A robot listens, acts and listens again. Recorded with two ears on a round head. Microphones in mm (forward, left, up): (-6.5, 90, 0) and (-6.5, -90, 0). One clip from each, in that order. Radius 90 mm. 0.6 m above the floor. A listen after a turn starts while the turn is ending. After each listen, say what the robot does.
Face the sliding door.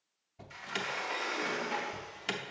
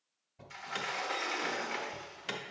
Turn 20° right.
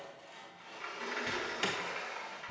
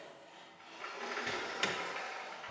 Found it: a sliding door, straight ahead, under 1 m away.